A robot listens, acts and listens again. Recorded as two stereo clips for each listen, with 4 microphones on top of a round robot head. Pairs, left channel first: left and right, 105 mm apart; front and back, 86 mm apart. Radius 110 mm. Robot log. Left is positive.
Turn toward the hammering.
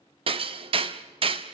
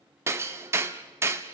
note: The hammering: 120° right.
cmd yaw -120
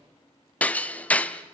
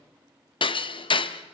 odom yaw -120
note: The hammering is now 15° left.
cmd yaw +15
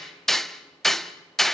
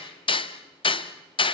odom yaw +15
end: Found it: hammering, straight ahead, under 1 m away.